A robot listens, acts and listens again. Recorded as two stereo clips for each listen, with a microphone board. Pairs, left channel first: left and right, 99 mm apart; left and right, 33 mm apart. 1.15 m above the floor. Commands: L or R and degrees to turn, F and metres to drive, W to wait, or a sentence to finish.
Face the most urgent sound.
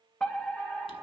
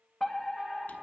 L30
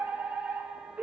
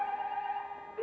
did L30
R15
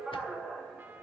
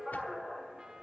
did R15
Facing the fire alarm, 1 to 2 m away.